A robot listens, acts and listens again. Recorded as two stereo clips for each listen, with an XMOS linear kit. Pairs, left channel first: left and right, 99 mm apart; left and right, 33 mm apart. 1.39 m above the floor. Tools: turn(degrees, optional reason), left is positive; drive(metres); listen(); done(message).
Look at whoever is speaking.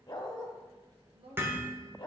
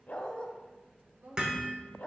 turn(degrees=-65, reason="The woman speaking: about 65° right or 115° right.")
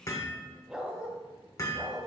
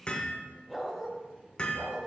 listen()
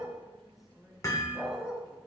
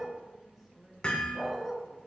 done("Found it: a woman speaking, straight ahead, 1 to 2 m away.")